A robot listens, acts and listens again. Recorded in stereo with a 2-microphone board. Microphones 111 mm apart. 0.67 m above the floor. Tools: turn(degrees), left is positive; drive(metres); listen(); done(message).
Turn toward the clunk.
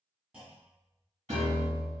turn(degrees=-30)
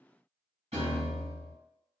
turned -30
listen()
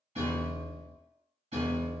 done("I heard a clunk, but can't make it out now. It was about 15° left or 135° right.")